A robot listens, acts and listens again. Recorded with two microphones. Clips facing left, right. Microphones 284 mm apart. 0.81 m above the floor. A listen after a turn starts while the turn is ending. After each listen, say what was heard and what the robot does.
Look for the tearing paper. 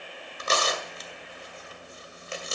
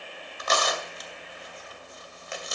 The tearing paper: about 30° left or 150° left. Turn 30° left.
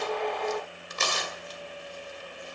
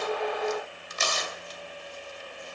So it is at 120° left. Turn 120° left.
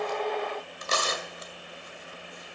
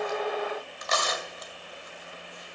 The tearing paper is now 35° left. Turn 35° left.
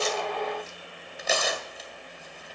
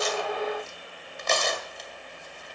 Facing the tearing paper, 2 to 4 m away.